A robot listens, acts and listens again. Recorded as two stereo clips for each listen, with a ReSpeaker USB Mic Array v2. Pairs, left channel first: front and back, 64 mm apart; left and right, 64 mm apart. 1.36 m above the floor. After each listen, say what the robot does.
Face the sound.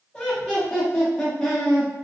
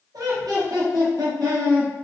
Turn 75° right.
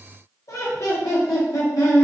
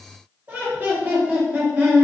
Turn 25° right.
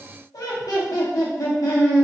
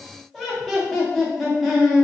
Facing the laughter, under 1 m away.